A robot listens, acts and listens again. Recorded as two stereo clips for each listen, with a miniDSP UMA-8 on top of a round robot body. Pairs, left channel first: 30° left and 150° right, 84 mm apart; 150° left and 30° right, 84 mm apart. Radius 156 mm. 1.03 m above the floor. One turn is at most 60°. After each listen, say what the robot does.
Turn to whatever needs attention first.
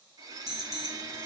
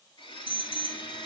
Turn 60° left.
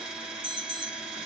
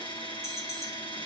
Turn 60° left.
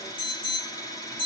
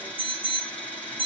Turn 40° left.
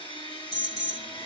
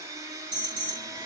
Turn 15° right.
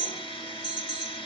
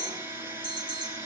Found it: an alarm, straight ahead, 1 to 2 m away.